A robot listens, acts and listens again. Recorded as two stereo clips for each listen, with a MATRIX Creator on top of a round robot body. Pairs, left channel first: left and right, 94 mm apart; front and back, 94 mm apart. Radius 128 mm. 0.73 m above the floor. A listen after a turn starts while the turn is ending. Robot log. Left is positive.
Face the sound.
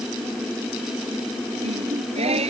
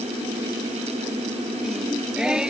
note: The singing: 95° right.
cmd yaw -95
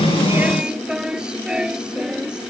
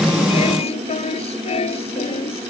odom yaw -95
note: The singing is now 10° right.
cmd yaw -10
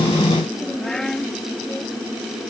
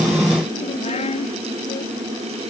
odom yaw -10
end: Found it: singing, straight ahead.